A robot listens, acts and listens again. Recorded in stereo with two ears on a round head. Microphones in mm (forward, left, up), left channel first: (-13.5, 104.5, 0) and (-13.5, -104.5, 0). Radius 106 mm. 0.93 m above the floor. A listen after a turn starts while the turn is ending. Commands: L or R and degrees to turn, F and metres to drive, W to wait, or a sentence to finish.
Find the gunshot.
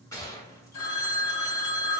L30
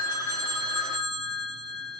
W
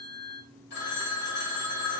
I heard a gunshot, but can't make it out now. It was about 15° right or 135° left.